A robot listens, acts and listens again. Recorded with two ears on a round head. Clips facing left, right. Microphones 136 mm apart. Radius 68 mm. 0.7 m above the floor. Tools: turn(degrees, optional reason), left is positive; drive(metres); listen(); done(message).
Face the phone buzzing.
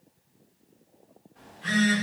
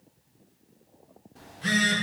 turn(degrees=-45, reason="The phone buzzing: about 45° right or 135° right.")
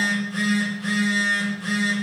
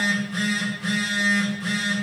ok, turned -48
done("Found it: a phone buzzing, straight ahead, 1 to 2 m away.")